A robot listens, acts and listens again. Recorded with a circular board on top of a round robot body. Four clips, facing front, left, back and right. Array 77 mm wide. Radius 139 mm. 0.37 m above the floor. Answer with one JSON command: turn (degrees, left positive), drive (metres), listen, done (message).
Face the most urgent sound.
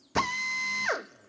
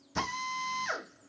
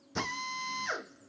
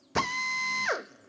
{"listen": true}
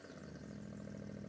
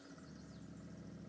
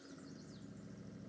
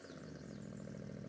{"listen": true}
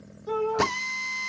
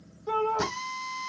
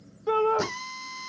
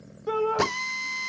{"turn": -150}
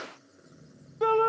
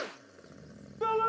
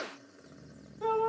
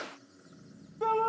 {"turn": 10}
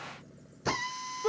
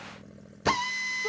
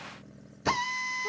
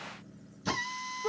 {"listen": true}
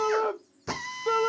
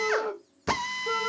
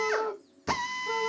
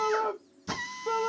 {"done": "Facing the shout, 1 to 2 m away."}